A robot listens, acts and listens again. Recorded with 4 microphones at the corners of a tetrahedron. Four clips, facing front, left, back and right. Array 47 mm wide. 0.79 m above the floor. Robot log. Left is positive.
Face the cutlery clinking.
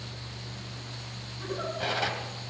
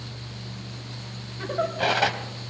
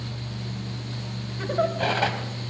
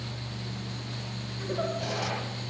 note: The cutlery clinking: 115° left.
cmd yaw +115
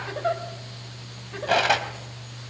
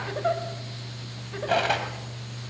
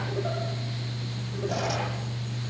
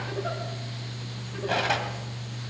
end: Found it: cutlery clinking, straight ahead.